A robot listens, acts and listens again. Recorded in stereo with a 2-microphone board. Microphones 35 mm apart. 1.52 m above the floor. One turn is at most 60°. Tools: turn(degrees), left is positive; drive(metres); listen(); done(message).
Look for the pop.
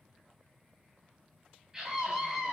listen()
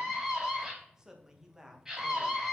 listen()
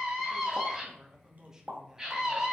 turn(degrees=-50)
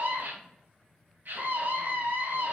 listen()
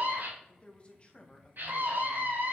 done("I heard a pop, but can't make it out now. It was about straight ahead or 80° right.")